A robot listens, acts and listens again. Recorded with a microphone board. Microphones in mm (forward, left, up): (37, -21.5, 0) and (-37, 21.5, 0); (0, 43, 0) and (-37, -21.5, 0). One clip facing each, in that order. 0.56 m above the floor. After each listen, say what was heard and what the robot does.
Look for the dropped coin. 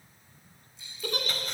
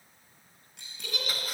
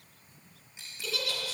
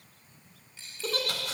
The dropped coin: 130° left. Turn 130° left.
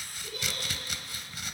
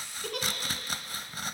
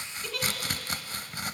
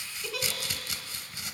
Facing where the dropped coin came from. I can't hear it now.